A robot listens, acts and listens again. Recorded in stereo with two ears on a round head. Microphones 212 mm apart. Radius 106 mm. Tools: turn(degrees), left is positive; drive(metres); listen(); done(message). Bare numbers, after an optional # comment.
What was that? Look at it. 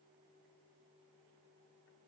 listen()
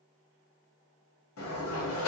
# The sliding door: about 65° left or 115° left.
turn(65)
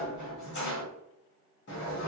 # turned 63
# So it is at 50° left.
turn(50)
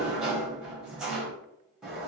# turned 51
done("Found it: a sliding door, straight ahead.")